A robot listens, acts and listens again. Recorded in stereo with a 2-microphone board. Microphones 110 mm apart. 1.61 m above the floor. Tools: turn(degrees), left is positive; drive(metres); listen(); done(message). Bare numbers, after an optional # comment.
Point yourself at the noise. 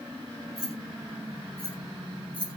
turn(-30)
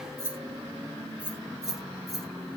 turn(30)
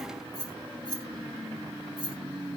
# So it is at 130° left.
turn(130)
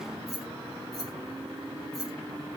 done("Found it: keys jangling, straight ahead, 1 to 2 m away.")